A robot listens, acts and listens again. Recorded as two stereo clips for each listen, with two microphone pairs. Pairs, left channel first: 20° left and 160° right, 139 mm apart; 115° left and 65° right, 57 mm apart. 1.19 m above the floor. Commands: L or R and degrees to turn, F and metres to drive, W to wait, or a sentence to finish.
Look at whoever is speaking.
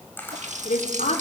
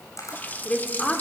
L45
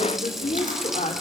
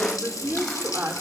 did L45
R15
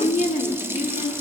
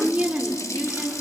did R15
Found it: a woman speaking, straight ahead.